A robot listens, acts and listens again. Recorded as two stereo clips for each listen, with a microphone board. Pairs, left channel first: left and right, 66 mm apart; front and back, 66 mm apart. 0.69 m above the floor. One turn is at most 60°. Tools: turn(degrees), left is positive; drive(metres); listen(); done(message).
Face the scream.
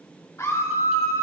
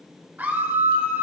turn(degrees=60)
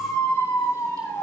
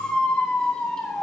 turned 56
turn(degrees=60)
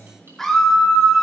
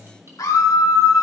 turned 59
done("Found it: a scream, straight ahead.")